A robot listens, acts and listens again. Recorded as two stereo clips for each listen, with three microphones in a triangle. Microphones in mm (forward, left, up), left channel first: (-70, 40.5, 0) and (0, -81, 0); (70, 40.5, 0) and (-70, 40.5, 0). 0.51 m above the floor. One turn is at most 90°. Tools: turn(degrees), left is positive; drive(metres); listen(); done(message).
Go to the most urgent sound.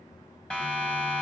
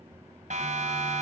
turn(degrees=-90)
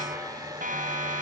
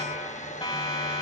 turn(degrees=-60)
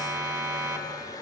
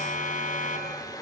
drive(metres=1.0)
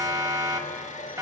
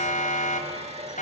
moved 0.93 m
drive(metres=1.0)
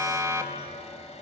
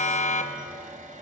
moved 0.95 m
drive(metres=1.0)
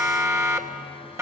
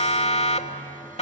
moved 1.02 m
drive(metres=1.0)
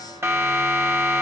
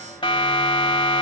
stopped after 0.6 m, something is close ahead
done("Arrived at the siren, straight ahead.")